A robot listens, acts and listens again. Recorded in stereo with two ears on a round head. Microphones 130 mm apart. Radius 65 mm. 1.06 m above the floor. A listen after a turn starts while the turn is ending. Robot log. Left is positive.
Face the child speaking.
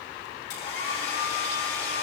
cmd idle
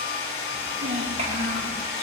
note: The child speaking: about 45° right or 135° right.
cmd yaw -45
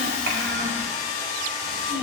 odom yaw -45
note: So it is at 115° right.
cmd yaw -115
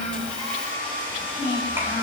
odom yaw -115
note: The child speaking is now 15° right.
cmd yaw -15
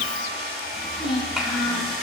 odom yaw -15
end: Found it: a child speaking, straight ahead, 2 to 4 m away.